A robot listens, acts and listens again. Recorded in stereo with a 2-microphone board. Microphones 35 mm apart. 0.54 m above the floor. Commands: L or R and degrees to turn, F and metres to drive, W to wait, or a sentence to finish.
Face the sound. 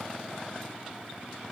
W
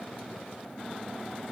W
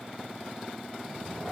R30
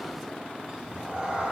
R150
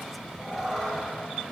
Found it: a cat meowing, straight ahead.